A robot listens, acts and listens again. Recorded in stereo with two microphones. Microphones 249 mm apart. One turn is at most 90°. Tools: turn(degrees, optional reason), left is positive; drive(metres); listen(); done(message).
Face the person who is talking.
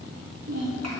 turn(degrees=-90)
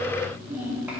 done("Facing the child speaking.")